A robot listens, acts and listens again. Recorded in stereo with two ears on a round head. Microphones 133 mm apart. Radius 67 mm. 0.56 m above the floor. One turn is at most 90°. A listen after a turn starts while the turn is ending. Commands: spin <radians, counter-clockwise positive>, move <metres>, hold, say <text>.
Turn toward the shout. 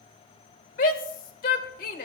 spin 1.13
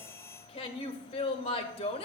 spin 0.70
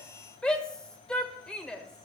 say Found it: a shout, straight ahead, 1 to 2 m away.